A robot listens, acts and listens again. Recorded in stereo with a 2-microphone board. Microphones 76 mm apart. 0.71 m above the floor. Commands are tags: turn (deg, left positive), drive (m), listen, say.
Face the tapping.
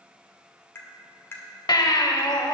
<turn deg="30"/>
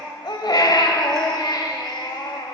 <listen/>
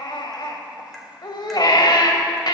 <listen/>
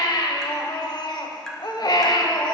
<say>I heard tapping, but can't make it out now. It was about straight ahead or 120° left.</say>